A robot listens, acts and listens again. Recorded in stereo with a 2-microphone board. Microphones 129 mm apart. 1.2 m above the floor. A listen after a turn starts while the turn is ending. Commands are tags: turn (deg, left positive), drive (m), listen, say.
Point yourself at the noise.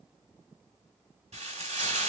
<turn deg="-65"/>
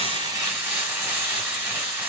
<turn deg="-20"/>
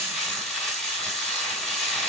<say>Found it: frying, straight ahead.</say>